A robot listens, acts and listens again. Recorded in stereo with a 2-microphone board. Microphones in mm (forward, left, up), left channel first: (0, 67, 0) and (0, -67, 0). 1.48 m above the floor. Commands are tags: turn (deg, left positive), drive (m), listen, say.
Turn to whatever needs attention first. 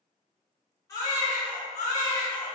<turn deg="25"/>
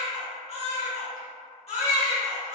<turn deg="130"/>
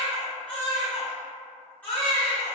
<turn deg="15"/>
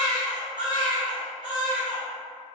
<say>Facing the baby crying, 1 to 2 m away.</say>